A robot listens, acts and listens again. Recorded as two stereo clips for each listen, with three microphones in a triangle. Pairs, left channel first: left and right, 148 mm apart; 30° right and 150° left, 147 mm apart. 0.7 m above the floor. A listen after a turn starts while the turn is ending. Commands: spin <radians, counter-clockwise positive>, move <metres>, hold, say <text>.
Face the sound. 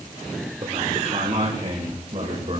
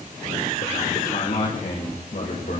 spin -0.70
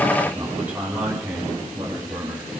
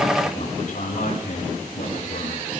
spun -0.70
spin -0.26
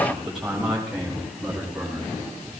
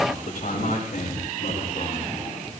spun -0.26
say Facing the man speaking, over 4 m away.